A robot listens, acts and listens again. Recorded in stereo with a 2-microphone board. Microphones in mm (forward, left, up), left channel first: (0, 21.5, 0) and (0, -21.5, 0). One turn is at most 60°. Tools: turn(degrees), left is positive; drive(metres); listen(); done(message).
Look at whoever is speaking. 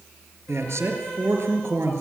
turn(degrees=-60)
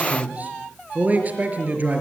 turn(degrees=-35)
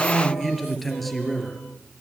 done("Found it: a man speaking, straight ahead.")